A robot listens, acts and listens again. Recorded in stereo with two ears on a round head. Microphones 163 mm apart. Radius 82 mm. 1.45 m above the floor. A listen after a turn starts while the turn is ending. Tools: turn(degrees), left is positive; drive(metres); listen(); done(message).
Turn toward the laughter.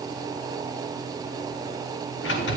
listen()
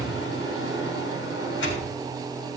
listen()
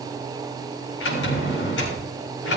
done("I can't make out laughter, only a sliding door.")